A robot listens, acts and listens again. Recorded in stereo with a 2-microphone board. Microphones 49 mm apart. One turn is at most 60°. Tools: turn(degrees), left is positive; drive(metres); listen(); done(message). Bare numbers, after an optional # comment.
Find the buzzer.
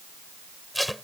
listen()
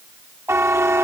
# The buzzer: about 65° right or 115° right.
turn(-60)
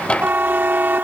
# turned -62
# So it is at 45° right.
turn(-45)
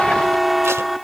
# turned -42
done("Found it: a buzzer, straight ahead.")